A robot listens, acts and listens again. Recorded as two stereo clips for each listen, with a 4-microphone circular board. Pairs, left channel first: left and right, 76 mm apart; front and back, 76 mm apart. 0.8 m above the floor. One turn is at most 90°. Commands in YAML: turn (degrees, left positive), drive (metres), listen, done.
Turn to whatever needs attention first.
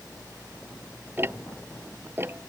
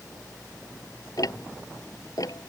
listen: true
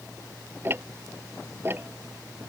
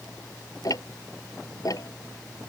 listen: true
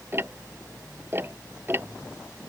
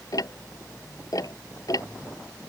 done: "I can't make out anything urgent to turn to."